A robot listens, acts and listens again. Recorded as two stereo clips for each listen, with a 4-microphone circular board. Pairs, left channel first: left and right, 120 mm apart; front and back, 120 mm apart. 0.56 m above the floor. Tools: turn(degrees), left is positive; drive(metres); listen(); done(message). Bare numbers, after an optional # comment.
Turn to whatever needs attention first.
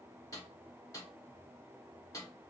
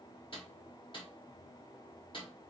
listen()
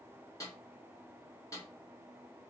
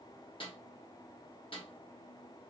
listen()
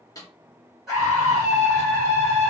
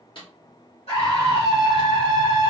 done("Facing the scream, 2 to 4 m away.")